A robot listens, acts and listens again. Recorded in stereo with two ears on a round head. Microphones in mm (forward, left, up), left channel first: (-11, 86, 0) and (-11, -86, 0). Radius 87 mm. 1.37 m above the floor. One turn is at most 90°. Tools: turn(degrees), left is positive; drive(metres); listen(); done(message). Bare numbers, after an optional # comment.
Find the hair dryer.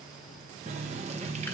listen()
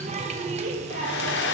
# The hair dryer: about 65° left or 115° left.
turn(65)
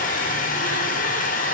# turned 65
# So it is at 45° left.
turn(45)
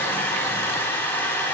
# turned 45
# The hair dryer is now 10° left.
turn(10)
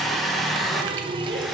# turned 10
done("Found it: a hair dryer, straight ahead, under 1 m away.")